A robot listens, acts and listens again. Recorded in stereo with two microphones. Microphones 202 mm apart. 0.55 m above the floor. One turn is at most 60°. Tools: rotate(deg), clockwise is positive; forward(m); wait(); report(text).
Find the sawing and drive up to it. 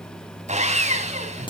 rotate(35)
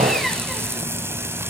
wait()
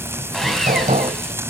wait()
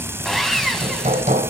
forward(1.0)
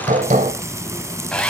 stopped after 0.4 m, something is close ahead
report("Blocked. The sawing is further on, straight ahead.")